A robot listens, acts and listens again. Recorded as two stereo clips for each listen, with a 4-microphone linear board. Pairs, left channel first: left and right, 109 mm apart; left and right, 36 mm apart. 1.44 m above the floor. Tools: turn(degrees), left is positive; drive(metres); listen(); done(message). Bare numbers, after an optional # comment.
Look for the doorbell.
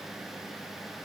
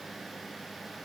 listen()
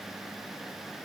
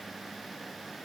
listen()
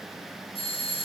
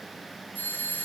# The doorbell: about 65° left or 115° left.
turn(65)
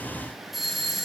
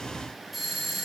done("Found it: a doorbell, straight ahead.")